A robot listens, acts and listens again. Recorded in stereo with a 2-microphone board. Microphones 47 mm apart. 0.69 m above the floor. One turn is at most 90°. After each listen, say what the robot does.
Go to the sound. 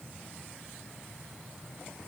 Keep listening.
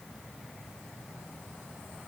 Keep listening.
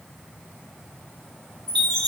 Turn 30° left.
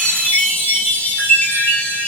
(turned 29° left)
Turn 90° left.
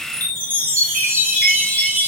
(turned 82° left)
Turn 40° left.
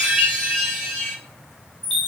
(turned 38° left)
Drive 1.0 m forward.
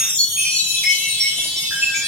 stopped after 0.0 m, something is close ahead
Blocked. The chime is further on, straight ahead.